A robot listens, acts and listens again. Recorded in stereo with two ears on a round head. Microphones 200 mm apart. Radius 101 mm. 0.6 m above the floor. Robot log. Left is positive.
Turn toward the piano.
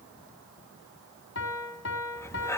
note: The piano: about 50° left or 130° left.
cmd yaw +50
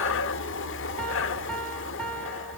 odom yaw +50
cmd idle
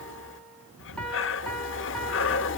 cmd idle
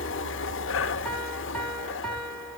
end: Facing the piano.